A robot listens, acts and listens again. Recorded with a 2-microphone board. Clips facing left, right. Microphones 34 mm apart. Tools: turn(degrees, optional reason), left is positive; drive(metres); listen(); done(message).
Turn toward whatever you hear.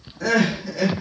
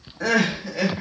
turn(degrees=-30, reason="The crying: about 30° right or 150° right.")
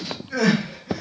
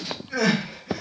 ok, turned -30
done("Facing the crying, under 1 m away.")